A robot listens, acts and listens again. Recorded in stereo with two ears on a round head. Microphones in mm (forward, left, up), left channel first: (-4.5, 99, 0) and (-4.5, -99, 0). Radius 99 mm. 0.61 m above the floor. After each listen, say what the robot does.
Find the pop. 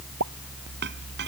Turn 90° right.
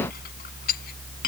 I heard a pop from this way, but can't make it out now.